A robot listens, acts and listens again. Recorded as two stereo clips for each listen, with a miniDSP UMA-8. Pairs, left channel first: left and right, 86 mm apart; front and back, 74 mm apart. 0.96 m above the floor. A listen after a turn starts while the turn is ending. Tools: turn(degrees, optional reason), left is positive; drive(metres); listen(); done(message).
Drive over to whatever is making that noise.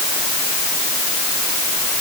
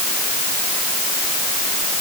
listen()
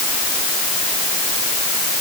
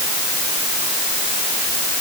listen()
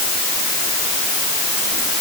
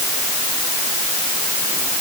done("I can't make out anything.")